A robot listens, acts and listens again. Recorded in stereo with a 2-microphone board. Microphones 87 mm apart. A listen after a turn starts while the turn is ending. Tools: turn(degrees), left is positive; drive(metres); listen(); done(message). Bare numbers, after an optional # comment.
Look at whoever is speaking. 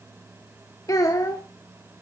# The child speaking: about 45° left or 135° left.
turn(45)
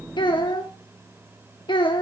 # So it is at 90° left.
turn(90)
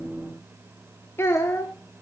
# The child speaking is now 30° left.
turn(30)
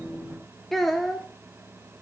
done("Facing the child speaking, 1 to 2 m away.")